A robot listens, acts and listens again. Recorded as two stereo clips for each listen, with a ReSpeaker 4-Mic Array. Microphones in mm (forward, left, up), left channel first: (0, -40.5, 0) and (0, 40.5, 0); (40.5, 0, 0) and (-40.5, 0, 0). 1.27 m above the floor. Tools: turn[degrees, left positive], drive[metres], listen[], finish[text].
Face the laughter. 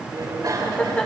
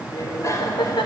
Thought: The laughter: 15° right.
Action: turn[-15]
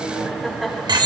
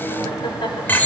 Action: finish[Found it: laughter, straight ahead, 2 to 4 m away.]